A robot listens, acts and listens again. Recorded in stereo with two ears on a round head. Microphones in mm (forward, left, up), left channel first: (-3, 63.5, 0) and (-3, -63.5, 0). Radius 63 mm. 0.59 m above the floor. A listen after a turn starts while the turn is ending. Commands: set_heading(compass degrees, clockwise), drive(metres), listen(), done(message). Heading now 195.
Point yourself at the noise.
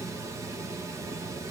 listen()
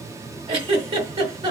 set_heading(230)
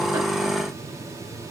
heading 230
listen()
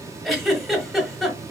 done("Facing the giggle, 1 to 2 m away.")